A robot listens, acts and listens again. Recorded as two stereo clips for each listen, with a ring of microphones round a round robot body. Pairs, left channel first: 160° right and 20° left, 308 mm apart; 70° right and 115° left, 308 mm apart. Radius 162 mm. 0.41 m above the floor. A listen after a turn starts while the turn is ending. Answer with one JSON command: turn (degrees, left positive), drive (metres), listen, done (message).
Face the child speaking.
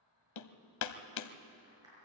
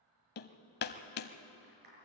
{"listen": true}
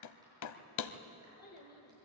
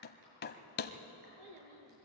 {"turn": 145}
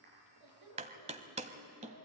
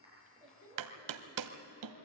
{"done": "Facing the child speaking, over 4 m away."}